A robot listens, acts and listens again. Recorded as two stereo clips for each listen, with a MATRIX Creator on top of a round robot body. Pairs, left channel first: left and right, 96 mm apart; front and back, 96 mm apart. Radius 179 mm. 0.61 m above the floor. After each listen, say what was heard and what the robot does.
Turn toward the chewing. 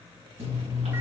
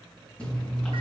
The chewing: 80° right. Turn 80° right.
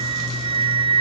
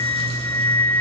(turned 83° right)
Keep listening.
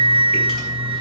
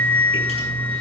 Keep listening.
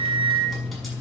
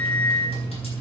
Found it: chewing, straight ahead, over 4 m away.